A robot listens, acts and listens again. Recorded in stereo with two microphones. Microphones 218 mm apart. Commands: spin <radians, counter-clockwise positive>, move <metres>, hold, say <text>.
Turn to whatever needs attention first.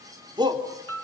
spin -0.35
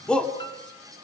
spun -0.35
say Facing the shout, 2 to 4 m away.